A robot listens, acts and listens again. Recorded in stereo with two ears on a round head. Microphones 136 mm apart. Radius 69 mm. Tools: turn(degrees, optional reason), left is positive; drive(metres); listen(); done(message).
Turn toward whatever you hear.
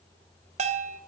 turn(degrees=-50, reason="The bell: about 50° right or 130° right.")
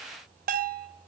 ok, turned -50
turn(degrees=-75, reason="So it is at 75° right.")
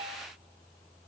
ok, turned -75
listen()
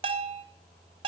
turn(degrees=-40, reason="The bell is now 40° right.")
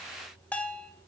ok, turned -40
turn(degrees=10, reason="The bell is now 10° left.")
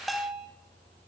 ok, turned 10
done("Facing the bell.")